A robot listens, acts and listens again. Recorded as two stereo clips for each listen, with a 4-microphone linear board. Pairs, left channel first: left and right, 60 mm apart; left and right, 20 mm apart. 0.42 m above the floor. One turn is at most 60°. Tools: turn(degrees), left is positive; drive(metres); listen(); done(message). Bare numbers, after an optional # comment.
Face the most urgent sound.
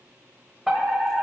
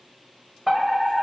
turn(-30)
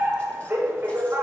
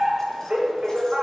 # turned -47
# So it is at 130° right.
turn(-60)
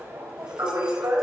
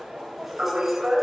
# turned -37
# The fire alarm is now 90° right.
turn(-60)
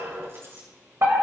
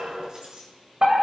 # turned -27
# The fire alarm is now 65° right.
turn(-60)
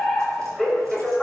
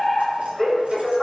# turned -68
done("Facing the fire alarm, 2 to 4 m away.")